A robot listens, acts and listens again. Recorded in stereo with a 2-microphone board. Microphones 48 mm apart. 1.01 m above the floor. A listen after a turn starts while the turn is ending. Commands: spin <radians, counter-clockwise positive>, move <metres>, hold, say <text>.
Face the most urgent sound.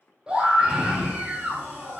spin -0.35
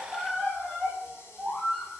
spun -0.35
say Facing the scream, 2 to 4 m away.